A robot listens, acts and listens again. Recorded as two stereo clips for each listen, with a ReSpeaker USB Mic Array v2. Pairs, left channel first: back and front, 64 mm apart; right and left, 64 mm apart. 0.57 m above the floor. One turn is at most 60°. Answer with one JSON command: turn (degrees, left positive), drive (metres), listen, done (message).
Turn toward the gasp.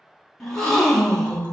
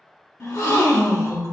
{"turn": -60}
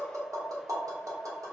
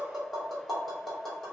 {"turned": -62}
{"turn": -35}
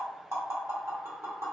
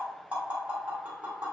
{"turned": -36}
{"done": "Facing where the gasp came from. I can't hear it now."}